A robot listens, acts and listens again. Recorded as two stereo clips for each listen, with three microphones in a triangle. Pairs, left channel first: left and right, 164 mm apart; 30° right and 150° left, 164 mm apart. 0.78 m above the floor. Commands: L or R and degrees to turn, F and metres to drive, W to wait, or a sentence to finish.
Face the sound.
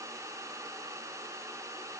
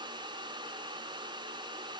W
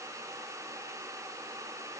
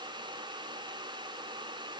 W
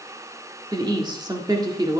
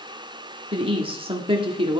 R155
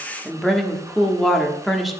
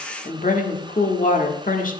Facing the woman speaking, 1 to 2 m away.